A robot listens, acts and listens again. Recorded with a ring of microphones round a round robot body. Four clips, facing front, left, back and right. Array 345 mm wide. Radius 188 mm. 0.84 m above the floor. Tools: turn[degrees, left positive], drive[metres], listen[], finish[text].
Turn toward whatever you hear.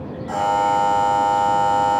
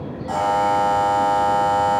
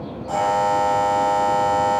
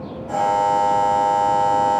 Thought: The buzzer: 70° left.
Action: turn[70]
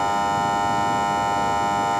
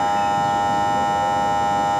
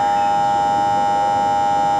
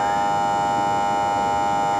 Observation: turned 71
Action: finish[Found it: a buzzer, straight ahead, 2 to 4 m away.]